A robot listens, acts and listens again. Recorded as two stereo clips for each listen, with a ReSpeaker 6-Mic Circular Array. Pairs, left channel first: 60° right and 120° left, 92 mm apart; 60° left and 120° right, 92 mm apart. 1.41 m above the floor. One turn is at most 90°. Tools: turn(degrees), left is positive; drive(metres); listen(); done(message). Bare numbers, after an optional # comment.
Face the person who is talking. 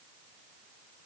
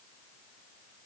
listen()
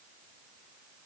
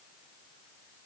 listen()
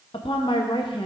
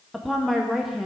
# The woman speaking: 30° right.
turn(-30)
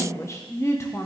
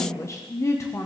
done("Facing the woman speaking, under 1 m away.")